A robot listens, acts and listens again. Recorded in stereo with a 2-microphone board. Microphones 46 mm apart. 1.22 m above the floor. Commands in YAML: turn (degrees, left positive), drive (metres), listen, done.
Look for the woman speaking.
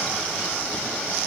listen: true
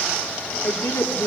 turn: 70
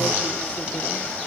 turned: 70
listen: true
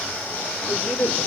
turn: 25
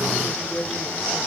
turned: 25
done: "Found it: a woman speaking, straight ahead."